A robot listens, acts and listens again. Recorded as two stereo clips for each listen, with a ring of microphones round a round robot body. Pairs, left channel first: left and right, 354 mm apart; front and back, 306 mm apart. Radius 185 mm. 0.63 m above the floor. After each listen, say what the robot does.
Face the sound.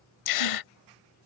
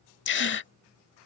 Turn 55° left.
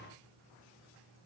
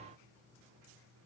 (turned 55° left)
Facing where the gasp came from. I can't hear it now.